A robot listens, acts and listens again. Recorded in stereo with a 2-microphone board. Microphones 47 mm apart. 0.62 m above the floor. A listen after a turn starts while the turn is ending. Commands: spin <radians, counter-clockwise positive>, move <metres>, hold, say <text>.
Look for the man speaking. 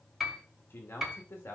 spin 1.05
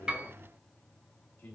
spin 0.79
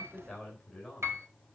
say Found it: a man speaking, straight ahead.